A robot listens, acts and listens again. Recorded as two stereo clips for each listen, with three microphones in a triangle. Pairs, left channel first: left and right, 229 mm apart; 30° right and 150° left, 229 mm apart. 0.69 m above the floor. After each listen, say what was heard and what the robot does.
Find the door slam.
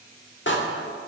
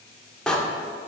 The door slam: 55° left. Turn 55° left.
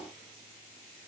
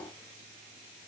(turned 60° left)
I heard a door slam from this way, but can't make it out now.